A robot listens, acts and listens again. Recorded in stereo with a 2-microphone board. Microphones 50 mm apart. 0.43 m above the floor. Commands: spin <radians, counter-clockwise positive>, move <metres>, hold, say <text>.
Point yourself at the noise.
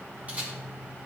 spin -0.44
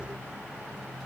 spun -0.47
hold
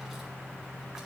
hold
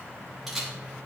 say Found it: a camera shutter, straight ahead, over 4 m away.